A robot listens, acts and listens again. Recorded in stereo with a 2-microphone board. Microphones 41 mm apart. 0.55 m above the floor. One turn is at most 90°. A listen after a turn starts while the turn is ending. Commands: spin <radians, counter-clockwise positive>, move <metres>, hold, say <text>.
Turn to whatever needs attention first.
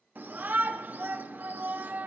spin -0.96
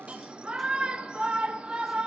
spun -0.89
spin -0.52
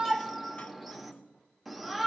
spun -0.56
say Facing the shout, 1 to 2 m away.